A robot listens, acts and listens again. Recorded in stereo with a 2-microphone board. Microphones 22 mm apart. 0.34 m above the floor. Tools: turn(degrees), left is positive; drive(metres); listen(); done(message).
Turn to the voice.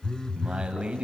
turn(degrees=-55)
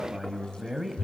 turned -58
turn(degrees=-20)
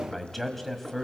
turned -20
done("Found it: a man speaking, straight ahead, 1 to 2 m away.")